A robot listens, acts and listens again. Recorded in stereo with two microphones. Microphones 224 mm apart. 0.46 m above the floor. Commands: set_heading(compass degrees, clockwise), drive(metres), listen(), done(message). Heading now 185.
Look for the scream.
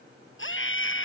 set_heading(120)
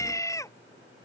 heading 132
set_heading(117)
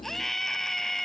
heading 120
done("Facing the scream.")